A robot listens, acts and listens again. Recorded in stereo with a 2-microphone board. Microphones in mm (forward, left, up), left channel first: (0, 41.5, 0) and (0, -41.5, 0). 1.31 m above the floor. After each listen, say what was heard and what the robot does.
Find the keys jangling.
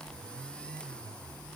Keep listening.
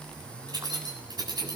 The keys jangling: about 55° right or 125° right. Turn 55° right.
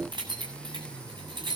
So it is at 75° right. Turn 75° right.
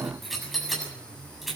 Facing the keys jangling, over 4 m away.